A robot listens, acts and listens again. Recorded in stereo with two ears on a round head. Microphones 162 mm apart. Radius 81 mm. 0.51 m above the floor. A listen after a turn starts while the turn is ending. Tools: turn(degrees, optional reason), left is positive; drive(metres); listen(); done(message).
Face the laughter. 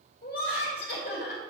turn(degrees=65, reason="The laughter: about 65° left or 115° left.")
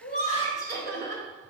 turn(degrees=20, reason="So it is at 20° left.")
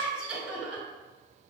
done("Found it: laughter, straight ahead, 2 to 4 m away.")